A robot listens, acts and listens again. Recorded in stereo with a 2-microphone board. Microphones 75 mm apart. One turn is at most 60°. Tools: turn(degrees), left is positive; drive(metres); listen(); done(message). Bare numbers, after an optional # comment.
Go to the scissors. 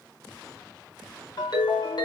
listen()
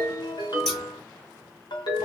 turn(30)
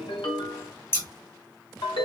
# So it is at 145° left.
turn(60)
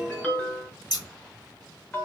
# The scissors is now 75° left.
turn(60)
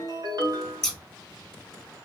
# The scissors is now 10° left.
turn(10)
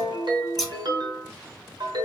drive(1.0)
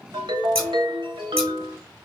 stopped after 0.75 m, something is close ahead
listen()
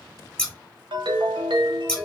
# The scissors is now 10° left.
turn(10)
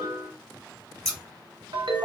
done("I am next to the scissors.")